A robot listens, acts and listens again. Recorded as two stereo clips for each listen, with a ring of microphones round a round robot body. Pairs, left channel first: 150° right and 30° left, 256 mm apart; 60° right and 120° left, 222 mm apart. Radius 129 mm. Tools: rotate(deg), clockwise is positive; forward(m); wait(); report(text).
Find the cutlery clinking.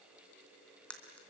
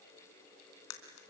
rotate(65)
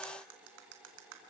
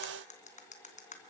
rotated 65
report("Facing the cutlery clinking.")